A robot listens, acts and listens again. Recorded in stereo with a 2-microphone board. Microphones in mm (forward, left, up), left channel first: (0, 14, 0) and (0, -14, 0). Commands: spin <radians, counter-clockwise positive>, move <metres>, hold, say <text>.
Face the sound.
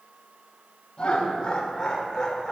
spin 0.35
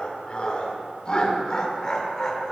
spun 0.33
spin 0.26
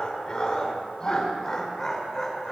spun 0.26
spin 0.52
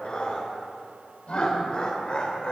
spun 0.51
spin 2.44
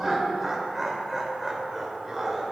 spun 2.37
say Found it: laughter, straight ahead, 2 to 4 m away.